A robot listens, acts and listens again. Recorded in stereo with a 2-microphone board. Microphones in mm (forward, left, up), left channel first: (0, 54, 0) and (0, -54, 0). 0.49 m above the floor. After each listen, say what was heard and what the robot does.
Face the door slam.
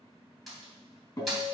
Turn 30° left.
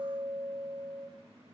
Keep listening.
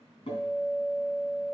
I heard a door slam, but can't make it out now. It was about 30° right or 150° left.